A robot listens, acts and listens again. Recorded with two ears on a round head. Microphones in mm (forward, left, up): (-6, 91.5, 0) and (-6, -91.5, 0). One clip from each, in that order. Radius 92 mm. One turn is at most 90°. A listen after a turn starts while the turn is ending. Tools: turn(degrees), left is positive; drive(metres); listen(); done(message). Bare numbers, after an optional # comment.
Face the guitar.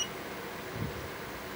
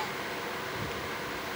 listen()
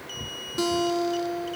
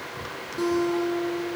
# The guitar: about 50° left or 130° left.
turn(50)
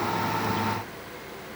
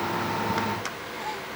listen()
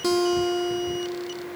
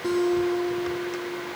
# So it is at 85° left.
turn(85)
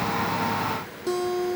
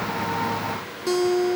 # The guitar is now 10° right.
turn(-10)
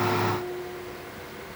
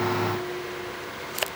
done("Facing the guitar, 1 to 2 m away.")